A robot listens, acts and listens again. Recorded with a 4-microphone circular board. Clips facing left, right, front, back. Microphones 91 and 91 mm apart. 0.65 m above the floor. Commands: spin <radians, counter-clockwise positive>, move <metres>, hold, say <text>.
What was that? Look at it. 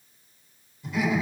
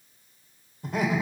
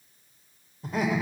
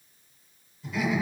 spin -0.79
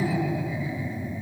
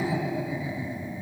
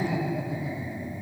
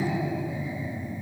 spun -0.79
spin -0.35
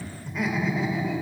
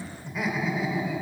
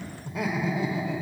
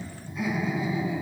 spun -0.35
say Facing the laughter.